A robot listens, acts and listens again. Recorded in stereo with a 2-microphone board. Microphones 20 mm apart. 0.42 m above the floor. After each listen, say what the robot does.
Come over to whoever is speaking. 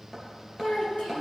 Turn 75° left.
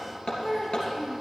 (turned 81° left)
Turn 20° left.
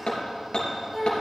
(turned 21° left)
Drive 1.0 m forward.
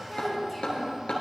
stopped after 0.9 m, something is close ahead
Keep listening.
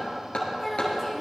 Blocked. The child speaking is further on, straight ahead.